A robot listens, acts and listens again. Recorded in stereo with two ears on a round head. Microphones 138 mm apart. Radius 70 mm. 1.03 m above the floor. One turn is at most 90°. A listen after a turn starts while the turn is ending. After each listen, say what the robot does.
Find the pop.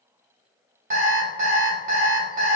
Keep listening.
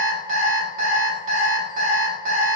Keep listening.
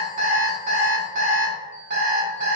I can't make out a pop to turn to.